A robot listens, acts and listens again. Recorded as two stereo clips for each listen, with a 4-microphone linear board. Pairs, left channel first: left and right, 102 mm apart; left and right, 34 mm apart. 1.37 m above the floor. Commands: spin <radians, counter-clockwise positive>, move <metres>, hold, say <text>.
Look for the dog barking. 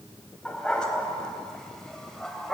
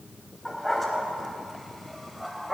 spin 0.52
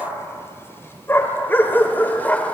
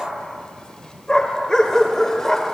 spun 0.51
spin 0.26
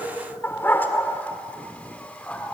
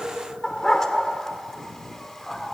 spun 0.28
spin 0.52
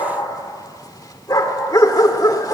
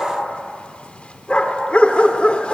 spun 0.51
spin 2.44
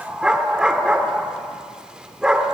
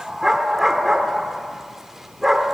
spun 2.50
spin -0.17
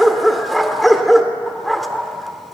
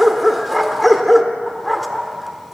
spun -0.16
say Facing the dog barking.